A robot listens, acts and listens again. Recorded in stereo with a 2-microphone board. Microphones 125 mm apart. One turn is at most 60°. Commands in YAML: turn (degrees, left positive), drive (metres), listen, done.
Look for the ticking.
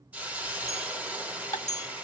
turn: 25
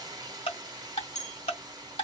turn: 60
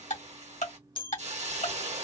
turn: 60
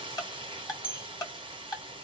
turn: 30
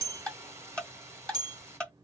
turn: 10
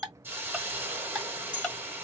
done: "Facing the ticking."